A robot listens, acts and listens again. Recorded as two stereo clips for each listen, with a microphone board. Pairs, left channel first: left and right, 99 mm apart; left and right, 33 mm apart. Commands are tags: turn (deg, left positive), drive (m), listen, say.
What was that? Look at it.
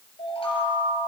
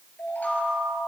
<turn deg="90"/>
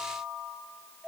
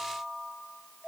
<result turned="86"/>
<turn deg="-10"/>
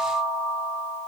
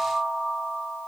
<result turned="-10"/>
<say>Facing the chime, over 4 m away.</say>